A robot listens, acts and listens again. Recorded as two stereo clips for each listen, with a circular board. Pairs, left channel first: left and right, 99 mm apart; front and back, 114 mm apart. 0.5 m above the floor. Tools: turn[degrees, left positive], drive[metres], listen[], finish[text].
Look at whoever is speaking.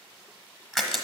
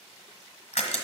Action: listen[]
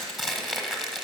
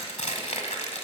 Action: listen[]
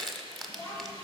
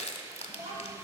Thought: The child speaking: 160° left.
Action: turn[160]
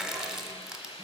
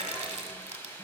Action: listen[]
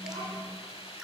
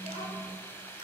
Thought: The child speaking is now 10° left.
Action: turn[10]
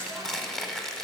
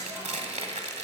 Action: listen[]
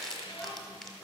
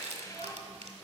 Action: finish[Facing the child speaking, 2 to 4 m away.]